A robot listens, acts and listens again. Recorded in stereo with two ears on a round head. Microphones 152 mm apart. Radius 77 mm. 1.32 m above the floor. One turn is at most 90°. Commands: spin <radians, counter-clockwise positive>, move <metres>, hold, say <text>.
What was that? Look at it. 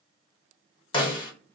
spin 0.44
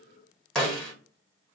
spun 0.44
say Facing the snare drum, 1 to 2 m away.